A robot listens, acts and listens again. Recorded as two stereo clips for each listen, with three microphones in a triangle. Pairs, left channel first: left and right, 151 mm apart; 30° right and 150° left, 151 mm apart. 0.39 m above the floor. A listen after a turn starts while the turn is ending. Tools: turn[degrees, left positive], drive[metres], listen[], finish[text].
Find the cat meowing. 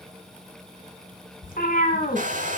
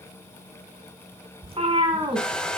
Thought: The cat meowing: 95° left.
Action: turn[95]
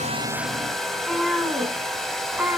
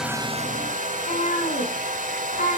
Thought: The cat meowing is now 15° right.
Action: turn[-15]
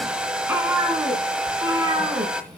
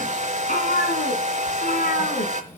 Thought: The cat meowing is now 25° right.
Action: turn[-25]
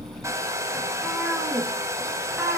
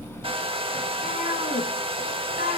Thought: The cat meowing is now 10° right.
Action: turn[-10]
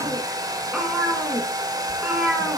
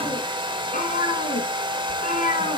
Action: finish[Found it: a cat meowing, straight ahead, 2 to 4 m away.]